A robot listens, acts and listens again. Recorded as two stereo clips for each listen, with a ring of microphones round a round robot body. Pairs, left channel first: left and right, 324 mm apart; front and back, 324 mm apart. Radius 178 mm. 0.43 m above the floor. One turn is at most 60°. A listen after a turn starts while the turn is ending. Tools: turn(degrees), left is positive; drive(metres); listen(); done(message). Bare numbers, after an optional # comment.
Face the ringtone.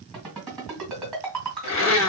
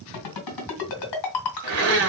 done("Facing the ringtone, 2 to 4 m away.")